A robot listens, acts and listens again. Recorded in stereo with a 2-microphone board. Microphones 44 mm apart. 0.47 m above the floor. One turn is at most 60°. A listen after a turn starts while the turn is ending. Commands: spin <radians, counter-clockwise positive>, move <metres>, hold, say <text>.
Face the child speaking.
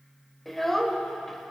spin 0.52
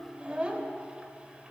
spin -0.44
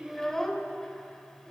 spin 0.17
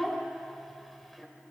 say Found it: a child speaking, straight ahead, 1 to 2 m away.